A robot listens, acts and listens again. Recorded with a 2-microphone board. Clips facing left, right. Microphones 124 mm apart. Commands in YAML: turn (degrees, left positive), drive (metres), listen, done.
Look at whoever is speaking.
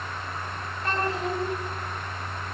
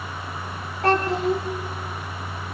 turn: -70
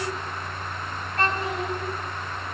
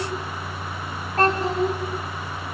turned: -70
turn: -40
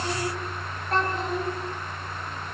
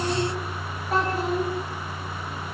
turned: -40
done: "Found it: a child speaking, straight ahead, over 4 m away."